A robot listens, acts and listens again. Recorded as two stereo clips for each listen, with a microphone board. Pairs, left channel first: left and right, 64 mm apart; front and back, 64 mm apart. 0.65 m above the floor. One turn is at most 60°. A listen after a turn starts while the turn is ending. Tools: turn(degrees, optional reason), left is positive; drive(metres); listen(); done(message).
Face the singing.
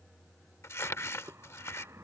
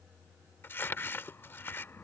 listen()
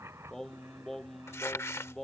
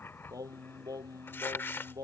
turn(degrees=60, reason="The singing: 175° left.")
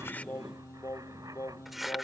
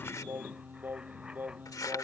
turn(degrees=60, reason="The singing is now 125° left.")
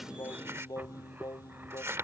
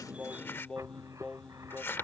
turn(degrees=60, reason="The singing is now 80° left.")
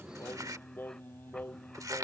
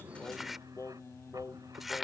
turn(degrees=35, reason="The singing is now 35° left.")
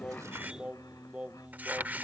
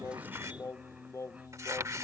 turn(degrees=-20, reason="The singing is now 20° right.")
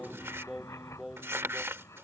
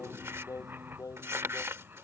turn(degrees=-10, reason="The singing is now 10° right.")
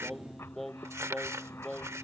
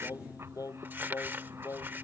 done("Found it: singing, straight ahead.")